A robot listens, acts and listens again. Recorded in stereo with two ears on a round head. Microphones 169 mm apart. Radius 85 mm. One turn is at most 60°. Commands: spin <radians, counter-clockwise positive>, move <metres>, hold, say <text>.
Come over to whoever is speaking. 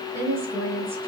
spin -0.52
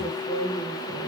spin 0.35
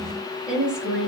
move 1.0
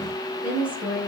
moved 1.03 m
move 1.0
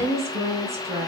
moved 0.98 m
spin -0.26
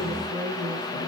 move 1.0
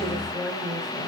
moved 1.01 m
move 1.0
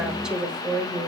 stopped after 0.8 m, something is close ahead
say I am next to the woman speaking.